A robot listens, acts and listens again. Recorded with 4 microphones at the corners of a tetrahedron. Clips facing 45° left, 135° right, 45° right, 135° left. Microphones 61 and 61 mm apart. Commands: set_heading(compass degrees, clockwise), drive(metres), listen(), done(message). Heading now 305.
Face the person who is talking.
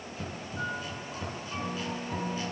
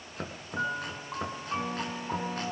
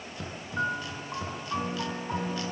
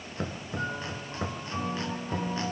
listen()
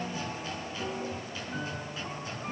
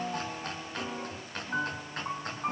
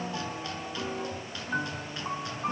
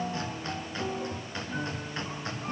listen()
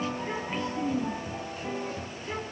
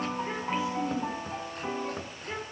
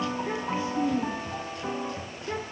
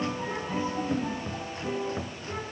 set_heading(355)
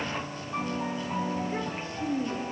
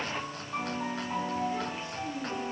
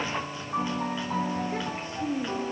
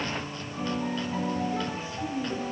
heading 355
done("Found it: a child speaking, straight ahead, over 4 m away.")